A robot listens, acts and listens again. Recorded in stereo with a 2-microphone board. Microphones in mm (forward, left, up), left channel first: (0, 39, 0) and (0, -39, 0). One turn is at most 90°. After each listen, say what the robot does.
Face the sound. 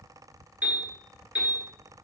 Turn 30° right.
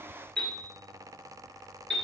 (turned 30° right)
Turn 15° left.
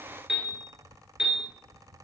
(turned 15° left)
Found it: a piano, straight ahead.